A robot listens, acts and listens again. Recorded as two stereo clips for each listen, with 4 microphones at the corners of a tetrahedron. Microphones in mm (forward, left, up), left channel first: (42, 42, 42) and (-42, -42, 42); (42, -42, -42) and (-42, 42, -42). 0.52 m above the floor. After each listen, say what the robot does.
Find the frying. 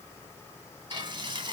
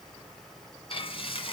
Turn 85° right.
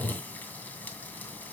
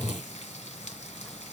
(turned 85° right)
Turn 30° right.
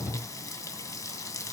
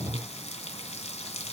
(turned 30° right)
Turn 15° right.
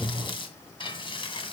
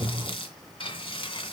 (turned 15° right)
Facing the frying.